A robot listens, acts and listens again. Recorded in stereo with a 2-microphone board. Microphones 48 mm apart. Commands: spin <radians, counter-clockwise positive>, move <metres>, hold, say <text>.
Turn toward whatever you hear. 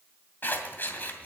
spin 0.70
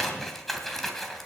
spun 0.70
say Found it: scissors, straight ahead.